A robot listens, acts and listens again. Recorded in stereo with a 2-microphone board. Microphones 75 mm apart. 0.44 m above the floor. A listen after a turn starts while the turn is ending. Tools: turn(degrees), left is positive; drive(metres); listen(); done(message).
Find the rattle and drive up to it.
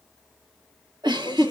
listen()
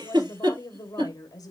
listen()
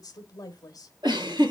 done("I can't make out a rattle to turn to.")